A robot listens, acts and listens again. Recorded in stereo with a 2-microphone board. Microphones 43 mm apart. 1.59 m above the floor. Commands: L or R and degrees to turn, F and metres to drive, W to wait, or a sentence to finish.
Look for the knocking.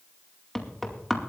L30
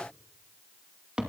R20
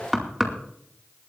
Found it: knocking, straight ahead, 2 to 4 m away.